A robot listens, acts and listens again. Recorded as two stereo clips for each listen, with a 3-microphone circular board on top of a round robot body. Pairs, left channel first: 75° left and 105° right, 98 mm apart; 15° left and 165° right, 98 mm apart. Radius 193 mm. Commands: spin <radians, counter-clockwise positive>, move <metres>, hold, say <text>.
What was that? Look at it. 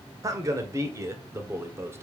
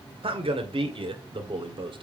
spin -2.88
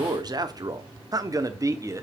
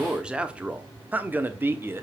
spin -2.18
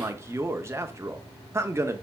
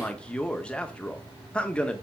spin -1.05
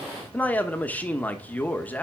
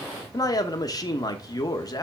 spin 0.17
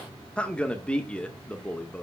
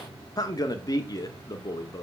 say Facing the man speaking.